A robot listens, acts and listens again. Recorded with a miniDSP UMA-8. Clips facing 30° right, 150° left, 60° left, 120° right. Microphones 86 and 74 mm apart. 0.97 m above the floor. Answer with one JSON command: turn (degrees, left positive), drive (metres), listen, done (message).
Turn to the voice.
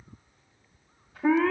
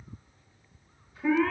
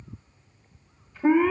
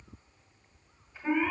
{"listen": true}
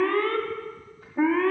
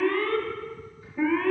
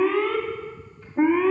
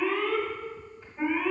{"listen": true}
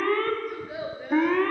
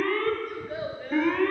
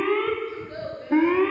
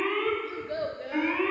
{"turn": -105}
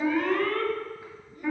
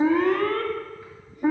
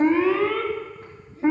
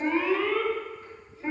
{"listen": true}
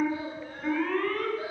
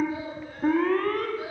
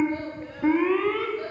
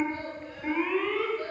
{"listen": true}
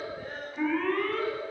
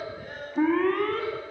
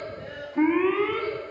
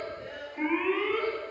{"turn": 20}
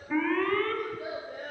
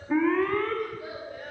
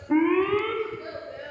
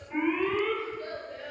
{"turn": -10}
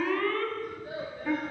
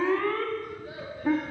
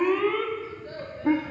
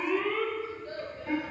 {"done": "Found it: a child speaking, straight ahead."}